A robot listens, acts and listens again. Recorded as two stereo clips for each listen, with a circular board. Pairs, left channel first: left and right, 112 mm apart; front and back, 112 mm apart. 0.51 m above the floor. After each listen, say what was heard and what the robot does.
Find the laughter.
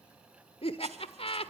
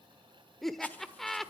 The laughter: 90° left. Turn 90° left.
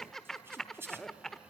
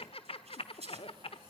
Facing the laughter, 1 to 2 m away.